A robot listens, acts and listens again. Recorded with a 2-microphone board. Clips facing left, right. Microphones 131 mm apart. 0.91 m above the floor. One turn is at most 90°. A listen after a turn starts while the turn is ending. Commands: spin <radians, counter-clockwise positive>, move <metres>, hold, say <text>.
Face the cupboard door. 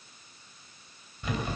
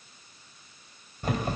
hold
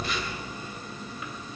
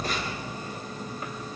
hold
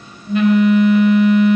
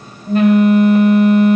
say I can't make out a cupboard door, only a phone buzzing.